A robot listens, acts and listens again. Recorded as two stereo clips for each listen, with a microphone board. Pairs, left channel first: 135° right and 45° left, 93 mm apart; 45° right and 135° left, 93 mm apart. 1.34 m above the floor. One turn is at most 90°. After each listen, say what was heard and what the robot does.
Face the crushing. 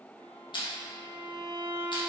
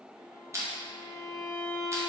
The crushing: 165° right. Turn 90° right.
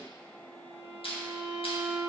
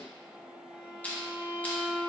The crushing is now 120° right. Turn 90° right.
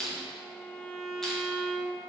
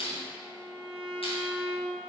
The crushing is now 45° right. Turn 45° right.
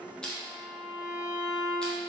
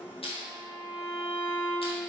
The crushing is now 50° right. Turn 50° right.
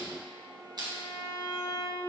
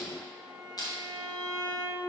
Facing the crushing, 1 to 2 m away.